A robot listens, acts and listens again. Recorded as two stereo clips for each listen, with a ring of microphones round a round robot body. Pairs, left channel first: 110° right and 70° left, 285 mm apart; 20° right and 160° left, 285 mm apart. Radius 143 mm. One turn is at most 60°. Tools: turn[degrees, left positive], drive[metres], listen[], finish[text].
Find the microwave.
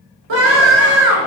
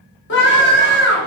Action: listen[]
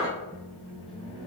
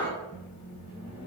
Thought: The microwave: 40° right.
Action: turn[-40]
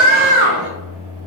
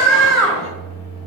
Action: finish[Facing the microwave.]